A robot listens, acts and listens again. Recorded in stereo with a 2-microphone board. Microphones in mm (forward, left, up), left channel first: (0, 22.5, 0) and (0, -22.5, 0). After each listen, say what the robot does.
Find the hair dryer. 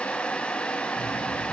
Keep listening.
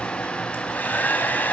Turn 45° left.
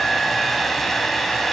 Facing the hair dryer.